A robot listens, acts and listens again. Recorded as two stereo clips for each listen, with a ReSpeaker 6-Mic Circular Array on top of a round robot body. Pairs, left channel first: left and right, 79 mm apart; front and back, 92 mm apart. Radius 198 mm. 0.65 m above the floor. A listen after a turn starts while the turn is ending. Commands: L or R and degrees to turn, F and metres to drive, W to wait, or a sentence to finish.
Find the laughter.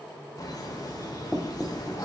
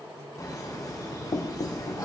L50
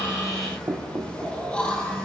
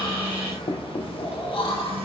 L10
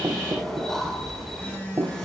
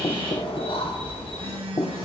Found it: laughter, straight ahead.